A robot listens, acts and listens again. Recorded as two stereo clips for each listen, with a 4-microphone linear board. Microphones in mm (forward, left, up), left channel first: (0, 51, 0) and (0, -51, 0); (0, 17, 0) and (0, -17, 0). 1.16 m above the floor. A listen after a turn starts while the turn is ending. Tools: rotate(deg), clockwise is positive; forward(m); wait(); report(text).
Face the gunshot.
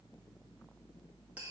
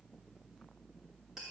wait()
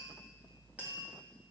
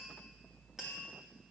wait()
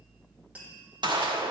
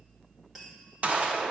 rotate(50)
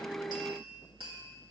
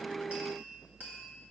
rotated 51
wait()
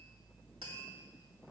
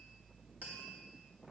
report("I heard a gunshot, but can't make it out now. It was about straight ahead or 80° right.")